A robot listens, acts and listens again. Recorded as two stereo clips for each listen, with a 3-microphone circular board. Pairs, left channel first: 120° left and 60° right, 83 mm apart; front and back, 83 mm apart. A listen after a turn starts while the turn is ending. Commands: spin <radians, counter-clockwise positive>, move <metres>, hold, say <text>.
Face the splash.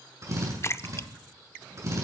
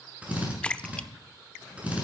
spin 1.22
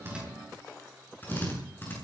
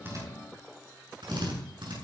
say I heard a splash from this way, but can't make it out now.